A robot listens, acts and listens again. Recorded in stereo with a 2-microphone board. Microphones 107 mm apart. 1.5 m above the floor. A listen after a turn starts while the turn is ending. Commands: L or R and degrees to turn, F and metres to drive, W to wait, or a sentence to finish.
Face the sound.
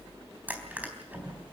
R15
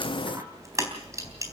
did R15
R150
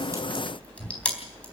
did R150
L15
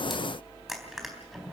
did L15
Found it: crushing, straight ahead, 2 to 4 m away.